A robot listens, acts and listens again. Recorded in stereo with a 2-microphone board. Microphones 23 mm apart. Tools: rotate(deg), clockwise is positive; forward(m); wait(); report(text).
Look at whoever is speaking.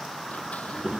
rotate(70)
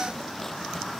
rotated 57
wait()
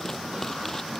wait()
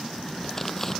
rotate(50)
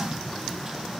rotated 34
rotate(15)
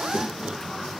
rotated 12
report("Found it: a child speaking, straight ahead.")